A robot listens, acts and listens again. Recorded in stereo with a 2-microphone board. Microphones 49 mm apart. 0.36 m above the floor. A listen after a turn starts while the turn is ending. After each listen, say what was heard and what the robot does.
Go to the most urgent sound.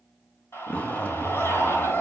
The scream: about 55° left or 125° left. Turn 55° left.
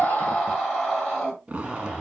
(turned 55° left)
Drive 1.0 m forward.
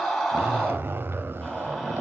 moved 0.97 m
Drive 1.0 m forward.
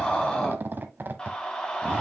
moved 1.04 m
The scream is now 20° left. Turn 20° left.
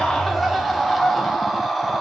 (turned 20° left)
Drive 1.0 m forward.
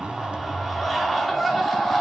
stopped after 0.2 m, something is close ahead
Arrived at the scream, straight ahead.